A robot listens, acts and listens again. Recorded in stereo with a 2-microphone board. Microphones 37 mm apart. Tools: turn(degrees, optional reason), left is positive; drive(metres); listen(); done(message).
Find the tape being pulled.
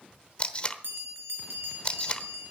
turn(degrees=35, reason="The tape being pulled: about 35° left or 145° left.")
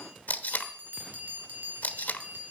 turn(degrees=100, reason="So it is at 100° left.")
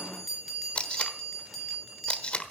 turn(degrees=35, reason="The tape being pulled is now 35° left.")
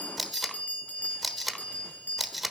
done("Found it: tape being pulled, straight ahead, 1 to 2 m away.")